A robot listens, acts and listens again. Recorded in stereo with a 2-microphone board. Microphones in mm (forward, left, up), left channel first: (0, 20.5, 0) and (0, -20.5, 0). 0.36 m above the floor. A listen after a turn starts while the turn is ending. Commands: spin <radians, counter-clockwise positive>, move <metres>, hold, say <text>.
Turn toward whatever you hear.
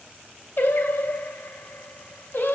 spin 1.13
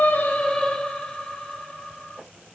spin 0.35
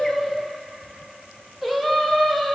say Found it: singing, straight ahead.